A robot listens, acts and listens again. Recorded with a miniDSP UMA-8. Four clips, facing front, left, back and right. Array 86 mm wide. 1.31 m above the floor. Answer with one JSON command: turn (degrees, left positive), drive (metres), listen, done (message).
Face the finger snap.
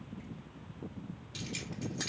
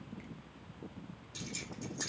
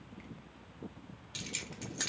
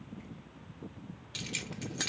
{"listen": true}
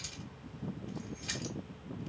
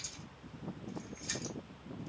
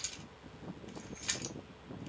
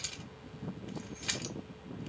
{"listen": true}
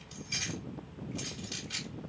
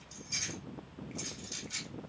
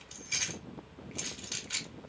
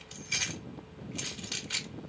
{"done": "I can't make out a finger snap to turn to."}